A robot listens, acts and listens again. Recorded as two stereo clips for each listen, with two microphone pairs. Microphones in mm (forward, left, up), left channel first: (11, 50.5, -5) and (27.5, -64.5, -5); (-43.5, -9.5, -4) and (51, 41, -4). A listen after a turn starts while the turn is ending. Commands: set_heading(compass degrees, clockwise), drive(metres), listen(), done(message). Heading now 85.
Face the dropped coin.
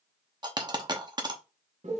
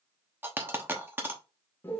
set_heading(120)
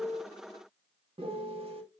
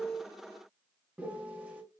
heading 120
done("I heard a dropped coin from this way, but can't make it out now.")